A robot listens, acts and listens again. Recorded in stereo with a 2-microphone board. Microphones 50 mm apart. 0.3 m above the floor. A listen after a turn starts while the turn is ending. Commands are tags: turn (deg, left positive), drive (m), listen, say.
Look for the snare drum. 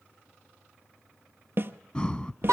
<turn deg="-50"/>
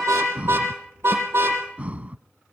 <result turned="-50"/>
<listen/>
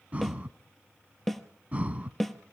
<say>Facing the snare drum.</say>